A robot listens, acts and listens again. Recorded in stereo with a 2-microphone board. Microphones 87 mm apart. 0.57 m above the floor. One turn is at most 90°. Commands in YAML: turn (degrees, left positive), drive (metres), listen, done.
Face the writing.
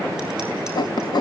turn: 55
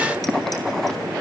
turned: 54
done: "Facing the writing."